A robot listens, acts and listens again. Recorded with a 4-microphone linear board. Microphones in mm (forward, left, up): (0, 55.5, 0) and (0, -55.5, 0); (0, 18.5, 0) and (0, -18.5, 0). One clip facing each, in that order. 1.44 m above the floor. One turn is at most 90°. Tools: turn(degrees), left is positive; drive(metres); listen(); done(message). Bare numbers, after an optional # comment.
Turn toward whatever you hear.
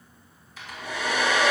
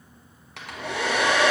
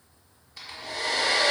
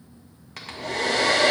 # The hair dryer: about 70° right or 110° right.
turn(-70)
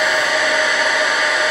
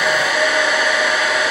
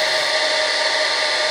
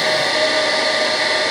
done("Facing the hair dryer.")